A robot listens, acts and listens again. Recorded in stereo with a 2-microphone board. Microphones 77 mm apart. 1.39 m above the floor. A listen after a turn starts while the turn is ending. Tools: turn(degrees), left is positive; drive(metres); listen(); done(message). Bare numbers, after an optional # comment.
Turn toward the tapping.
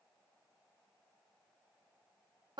listen()
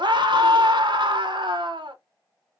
listen()
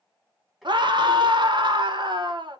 turn(30)
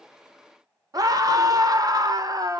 listen()
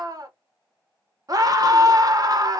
listen()
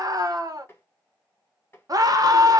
# So it is at 155° left.
turn(155)
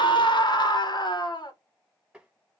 # The tapping is now 10° right.
turn(-10)
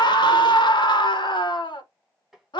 done("Found it: tapping, straight ahead.")